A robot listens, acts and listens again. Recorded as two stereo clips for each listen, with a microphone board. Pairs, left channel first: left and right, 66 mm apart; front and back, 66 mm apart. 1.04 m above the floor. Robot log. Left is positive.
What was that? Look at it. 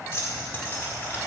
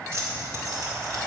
note: The keys jangling: 150° left.
cmd yaw +150
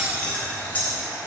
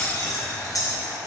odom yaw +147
note: The keys jangling is now 25° left.
cmd yaw +25
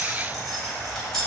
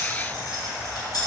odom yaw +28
end: Facing the keys jangling.